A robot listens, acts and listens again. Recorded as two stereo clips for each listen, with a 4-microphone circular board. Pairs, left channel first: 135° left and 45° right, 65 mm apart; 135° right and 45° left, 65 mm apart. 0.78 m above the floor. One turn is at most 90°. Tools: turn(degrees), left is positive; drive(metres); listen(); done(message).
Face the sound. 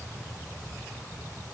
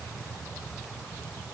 listen()
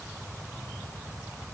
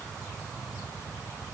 listen()
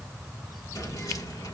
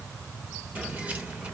turn(degrees=90)
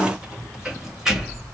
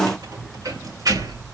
turn(degrees=35)
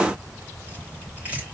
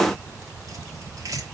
turn(degrees=20)
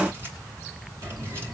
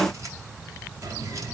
turn(degrees=10)
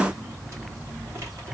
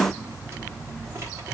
done("Facing the keys jangling.")